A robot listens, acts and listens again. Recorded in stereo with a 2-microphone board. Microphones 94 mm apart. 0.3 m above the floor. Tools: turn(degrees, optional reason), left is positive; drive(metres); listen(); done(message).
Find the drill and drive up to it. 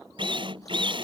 turn(degrees=-55, reason="The drill: about 55° right or 125° right.")
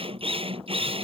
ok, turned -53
turn(degrees=-70, reason="So it is at 70° right.")
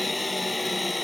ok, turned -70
drive(metres=1.0)
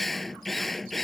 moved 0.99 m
drive(metres=1.0)
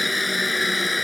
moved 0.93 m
drive(metres=1.0)
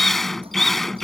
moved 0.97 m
drive(metres=1.0)
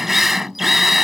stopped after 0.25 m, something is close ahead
done("Arrived at the drill, straight ahead.")